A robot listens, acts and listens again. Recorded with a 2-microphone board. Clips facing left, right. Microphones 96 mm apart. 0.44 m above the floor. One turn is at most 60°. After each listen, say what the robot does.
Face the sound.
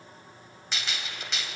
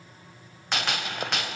Turn 60° right.
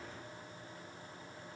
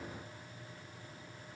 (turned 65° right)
Keep listening.
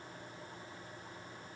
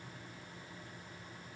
I heard a gunshot, but can't make it out now. It was about 5° left or 55° right.